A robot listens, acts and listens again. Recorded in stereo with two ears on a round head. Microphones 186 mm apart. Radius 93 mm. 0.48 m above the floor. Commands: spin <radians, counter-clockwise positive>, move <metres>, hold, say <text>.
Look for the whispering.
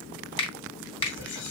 spin 0.96
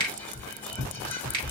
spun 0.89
spin 0.17
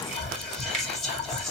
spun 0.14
say Found it: whispering, straight ahead.